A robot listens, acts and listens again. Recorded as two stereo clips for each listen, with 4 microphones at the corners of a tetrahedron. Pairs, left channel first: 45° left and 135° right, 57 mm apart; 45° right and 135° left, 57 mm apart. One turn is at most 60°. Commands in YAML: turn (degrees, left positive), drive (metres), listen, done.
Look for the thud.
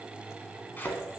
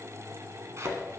turn: 60
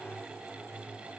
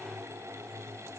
turn: 40
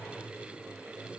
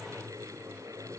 done: "I heard a thud from this way, but can't make it out now."